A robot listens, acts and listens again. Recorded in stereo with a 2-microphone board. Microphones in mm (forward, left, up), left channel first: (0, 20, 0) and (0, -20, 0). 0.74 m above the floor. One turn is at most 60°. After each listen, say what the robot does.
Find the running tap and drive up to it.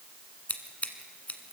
Keep listening.
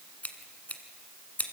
Keep listening.
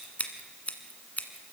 I can't make out a running tap, only scissors.